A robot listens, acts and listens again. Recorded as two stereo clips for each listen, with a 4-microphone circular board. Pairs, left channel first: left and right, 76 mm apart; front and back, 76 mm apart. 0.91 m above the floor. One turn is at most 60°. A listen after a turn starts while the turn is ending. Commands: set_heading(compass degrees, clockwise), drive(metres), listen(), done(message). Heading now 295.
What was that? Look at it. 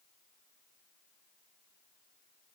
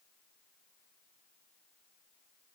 listen()
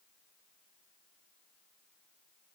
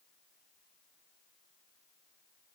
listen()
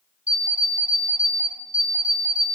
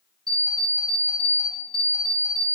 set_heading(355)
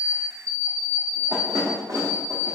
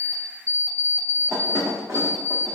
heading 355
set_heading(55)
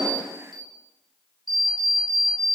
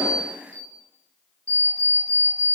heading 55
set_heading(115)
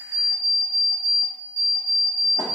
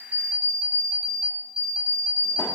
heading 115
set_heading(160)
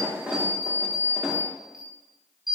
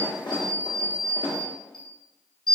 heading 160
set_heading(170)
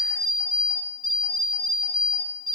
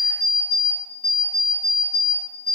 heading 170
done("Found it: an alarm clock, straight ahead, under 1 m away.")